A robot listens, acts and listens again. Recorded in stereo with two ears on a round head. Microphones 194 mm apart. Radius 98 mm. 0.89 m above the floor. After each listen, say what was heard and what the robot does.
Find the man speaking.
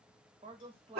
The man speaking: about 25° right or 155° right. Turn 25° right.
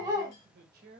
So it is at 125° right. Turn 125° right.
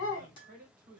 The man speaking is now 45° right. Turn 45° right.
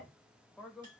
Facing the man speaking.